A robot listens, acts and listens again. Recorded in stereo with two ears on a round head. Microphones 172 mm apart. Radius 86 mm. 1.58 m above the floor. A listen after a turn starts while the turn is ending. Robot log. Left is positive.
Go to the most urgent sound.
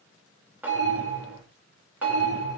note: The alarm: about 70° right or 110° right.
cmd yaw -70
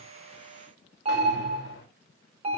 note: So it is at 35° right.
cmd yaw -35
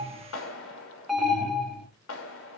cmd fwd 1.0
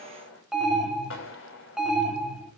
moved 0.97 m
cmd fwd 1.0
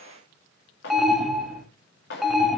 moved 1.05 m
cmd fwd 1.0
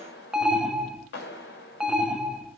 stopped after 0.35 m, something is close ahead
end: I am next to the alarm.